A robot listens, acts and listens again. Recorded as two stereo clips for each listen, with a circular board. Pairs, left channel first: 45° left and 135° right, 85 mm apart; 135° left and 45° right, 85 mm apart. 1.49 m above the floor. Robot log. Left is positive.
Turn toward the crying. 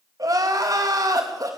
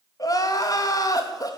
note: The crying: straight behind.
cmd yaw +180
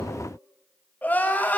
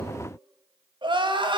note: The crying is now 25° right.
cmd yaw -25
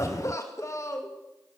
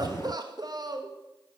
end: Found it: crying, straight ahead.